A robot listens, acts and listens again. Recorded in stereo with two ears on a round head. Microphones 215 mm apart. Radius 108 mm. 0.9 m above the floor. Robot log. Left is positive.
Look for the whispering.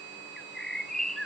cmd idle
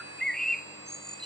cmd idle
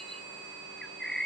end: I can't make out whispering, only a bird.